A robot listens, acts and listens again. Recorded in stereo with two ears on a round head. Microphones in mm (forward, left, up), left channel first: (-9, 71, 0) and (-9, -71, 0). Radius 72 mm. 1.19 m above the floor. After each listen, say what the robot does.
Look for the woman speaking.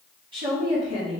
Turn 35° right.
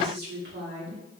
Turn 105° right.
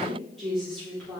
Found it: a woman speaking, straight ahead, 2 to 4 m away.